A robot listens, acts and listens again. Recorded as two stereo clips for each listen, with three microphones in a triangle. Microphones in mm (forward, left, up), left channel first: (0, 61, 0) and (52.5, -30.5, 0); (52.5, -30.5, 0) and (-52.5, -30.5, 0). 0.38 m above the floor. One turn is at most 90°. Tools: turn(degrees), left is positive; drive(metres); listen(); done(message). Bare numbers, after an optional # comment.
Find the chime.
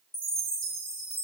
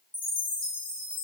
# The chime: 35° left.
turn(35)
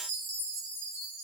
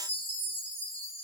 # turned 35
done("Facing the chime, 1 to 2 m away.")